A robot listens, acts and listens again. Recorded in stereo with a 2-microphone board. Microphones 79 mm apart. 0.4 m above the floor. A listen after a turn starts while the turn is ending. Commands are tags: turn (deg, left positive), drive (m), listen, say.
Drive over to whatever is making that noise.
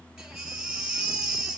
<turn deg="-30"/>
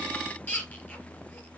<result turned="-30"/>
<turn deg="20"/>
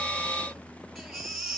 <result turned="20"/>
<drive m="1.0"/>
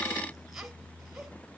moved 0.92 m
<listen/>
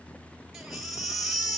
<drive m="1.0"/>
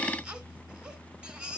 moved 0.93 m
<turn deg="-15"/>
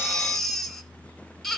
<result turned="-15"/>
<drive m="1.0"/>
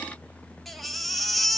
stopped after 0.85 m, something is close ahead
<say>I am next to the baby crying.</say>